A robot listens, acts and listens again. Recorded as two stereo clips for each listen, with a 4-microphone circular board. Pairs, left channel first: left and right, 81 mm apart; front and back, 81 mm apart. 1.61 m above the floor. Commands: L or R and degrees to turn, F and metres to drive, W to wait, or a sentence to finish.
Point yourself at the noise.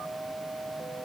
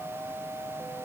W
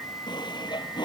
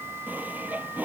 L110
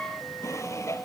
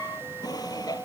L35
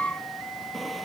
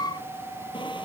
W
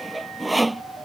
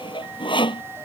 Facing the sawing.